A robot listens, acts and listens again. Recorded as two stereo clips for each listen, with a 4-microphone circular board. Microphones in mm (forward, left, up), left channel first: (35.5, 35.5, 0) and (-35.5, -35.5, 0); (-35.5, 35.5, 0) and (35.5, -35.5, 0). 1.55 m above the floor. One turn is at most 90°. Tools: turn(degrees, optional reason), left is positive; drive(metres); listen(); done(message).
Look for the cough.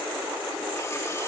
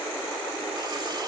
listen()
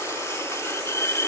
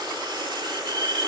listen()
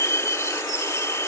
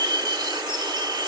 done("I can't make out a cough, only cutlery clinking.")